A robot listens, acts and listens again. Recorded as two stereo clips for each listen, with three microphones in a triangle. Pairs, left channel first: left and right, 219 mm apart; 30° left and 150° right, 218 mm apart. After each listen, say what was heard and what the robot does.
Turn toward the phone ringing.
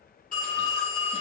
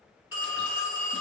The phone ringing: 40° left. Turn 40° left.
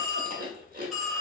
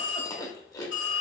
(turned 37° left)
Facing the phone ringing, 1 to 2 m away.